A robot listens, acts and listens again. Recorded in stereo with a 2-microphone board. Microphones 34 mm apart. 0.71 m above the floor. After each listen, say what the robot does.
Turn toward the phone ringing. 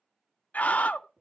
Keep listening.
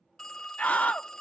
Turn 30° left.
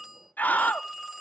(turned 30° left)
Turn 15° right.
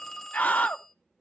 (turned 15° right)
Facing the phone ringing, 1 to 2 m away.